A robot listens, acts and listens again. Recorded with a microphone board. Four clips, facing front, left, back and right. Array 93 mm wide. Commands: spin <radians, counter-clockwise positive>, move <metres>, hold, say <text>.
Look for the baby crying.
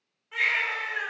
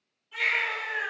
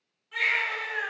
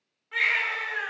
spin -1.22
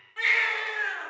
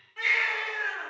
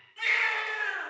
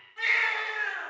say Found it: a baby crying, straight ahead.